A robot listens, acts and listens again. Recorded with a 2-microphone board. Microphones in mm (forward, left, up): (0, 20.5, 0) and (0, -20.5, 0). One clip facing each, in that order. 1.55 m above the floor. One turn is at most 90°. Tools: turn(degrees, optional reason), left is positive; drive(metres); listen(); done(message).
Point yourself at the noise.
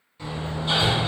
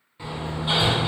turn(degrees=-15, reason="The hammering: about 15° right or 165° right.")
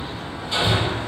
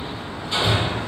done("Facing the hammering.")